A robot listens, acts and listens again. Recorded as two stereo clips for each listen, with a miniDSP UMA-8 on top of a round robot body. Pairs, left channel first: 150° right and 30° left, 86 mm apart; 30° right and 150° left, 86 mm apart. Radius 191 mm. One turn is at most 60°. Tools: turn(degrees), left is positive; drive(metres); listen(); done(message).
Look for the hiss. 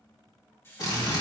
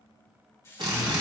turn(degrees=-60)
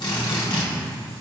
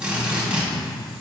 turn(degrees=-30)
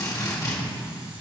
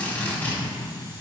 listen()
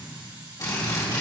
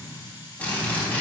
done("I heard a hiss from this way, but can't make it out now.")